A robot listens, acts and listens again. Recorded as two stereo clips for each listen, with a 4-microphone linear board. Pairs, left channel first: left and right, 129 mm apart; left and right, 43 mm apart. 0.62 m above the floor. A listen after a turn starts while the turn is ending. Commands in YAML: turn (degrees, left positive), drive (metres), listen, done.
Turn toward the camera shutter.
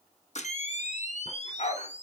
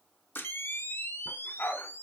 turn: 65
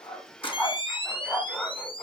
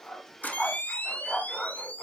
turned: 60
turn: 45
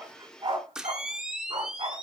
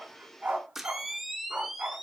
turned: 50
done: "Found it: a camera shutter, straight ahead."